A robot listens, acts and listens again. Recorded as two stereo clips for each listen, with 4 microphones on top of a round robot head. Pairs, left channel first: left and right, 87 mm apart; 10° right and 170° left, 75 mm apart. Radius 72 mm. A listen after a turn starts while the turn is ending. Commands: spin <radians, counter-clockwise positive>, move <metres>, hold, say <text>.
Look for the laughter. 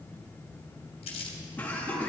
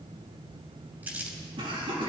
spin 2.88
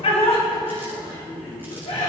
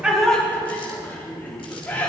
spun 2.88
spin 1.05
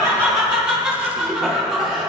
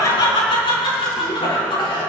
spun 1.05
say Found it: laughter, straight ahead.